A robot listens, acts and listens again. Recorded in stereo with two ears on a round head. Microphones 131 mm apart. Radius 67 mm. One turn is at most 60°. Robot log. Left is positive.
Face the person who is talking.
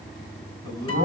note: The man speaking: about 30° right or 150° right.
cmd yaw -30
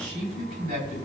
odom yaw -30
note: So it is at 120° right.
cmd yaw -60
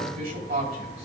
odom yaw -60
note: The man speaking is now 65° right.
cmd yaw -60
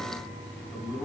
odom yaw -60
end: Found it: a man speaking, straight ahead, over 4 m away.